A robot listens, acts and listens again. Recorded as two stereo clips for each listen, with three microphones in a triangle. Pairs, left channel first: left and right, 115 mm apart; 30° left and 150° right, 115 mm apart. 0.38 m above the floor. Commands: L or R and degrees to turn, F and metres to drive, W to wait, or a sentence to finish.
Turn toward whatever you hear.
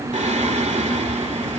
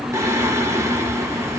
R85
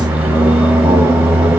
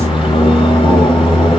R10
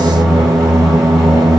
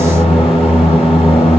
Found it: singing, straight ahead, under 1 m away.